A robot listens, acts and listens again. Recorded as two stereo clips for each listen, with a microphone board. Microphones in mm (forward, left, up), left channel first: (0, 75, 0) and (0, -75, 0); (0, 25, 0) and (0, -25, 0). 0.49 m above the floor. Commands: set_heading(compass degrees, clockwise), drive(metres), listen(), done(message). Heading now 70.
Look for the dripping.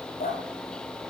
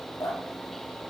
set_heading(340)
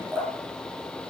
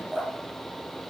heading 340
set_heading(355)
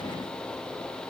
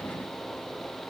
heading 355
listen()
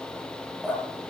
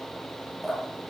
done("Found it: dripping, straight ahead, over 4 m away.")